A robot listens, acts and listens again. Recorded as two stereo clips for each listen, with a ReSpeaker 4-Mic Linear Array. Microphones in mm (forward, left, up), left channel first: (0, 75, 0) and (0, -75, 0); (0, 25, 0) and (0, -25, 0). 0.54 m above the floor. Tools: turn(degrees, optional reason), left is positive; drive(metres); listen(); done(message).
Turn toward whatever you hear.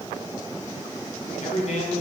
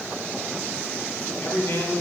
turn(degrees=55, reason="The man speaking: about 55° left or 125° left.")
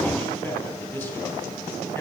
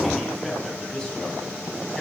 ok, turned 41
turn(degrees=15, reason="So it is at 15° left.")
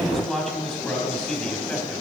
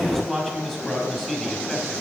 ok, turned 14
done("Found it: a man speaking, straight ahead.")